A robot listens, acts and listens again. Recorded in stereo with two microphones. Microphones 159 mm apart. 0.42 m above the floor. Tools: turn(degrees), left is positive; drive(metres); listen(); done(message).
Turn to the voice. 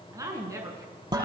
turn(degrees=-20)
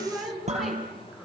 done("Facing the woman speaking.")